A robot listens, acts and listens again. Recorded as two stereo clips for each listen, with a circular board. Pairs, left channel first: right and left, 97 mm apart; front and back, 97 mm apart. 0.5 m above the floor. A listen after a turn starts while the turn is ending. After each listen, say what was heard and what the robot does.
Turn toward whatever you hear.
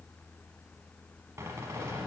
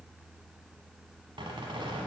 The squeak: 150° left. Turn 150° left.
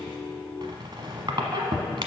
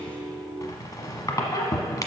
The squeak is now 50° left. Turn 50° left.
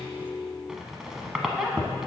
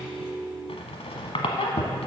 Facing the squeak, 1 to 2 m away.